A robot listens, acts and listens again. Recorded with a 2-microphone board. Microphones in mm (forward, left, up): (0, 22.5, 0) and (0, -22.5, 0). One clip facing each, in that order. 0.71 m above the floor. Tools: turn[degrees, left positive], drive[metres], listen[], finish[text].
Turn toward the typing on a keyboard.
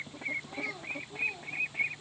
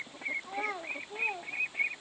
Action: listen[]
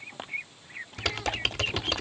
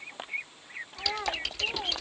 Thought: The typing on a keyboard: about 50° left or 130° left.
Action: turn[50]
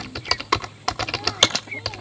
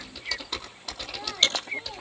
Thought: So it is at 80° left.
Action: turn[80]
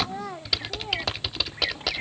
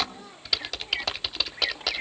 Action: finish[Found it: typing on a keyboard, straight ahead, under 1 m away.]